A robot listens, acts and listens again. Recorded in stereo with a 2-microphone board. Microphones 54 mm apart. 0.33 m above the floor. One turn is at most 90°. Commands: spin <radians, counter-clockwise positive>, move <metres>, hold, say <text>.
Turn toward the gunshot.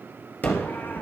spin 0.61
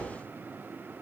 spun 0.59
hold
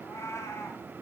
say I heard a gunshot, but can't make it out now. It was about straight ahead or 110° left.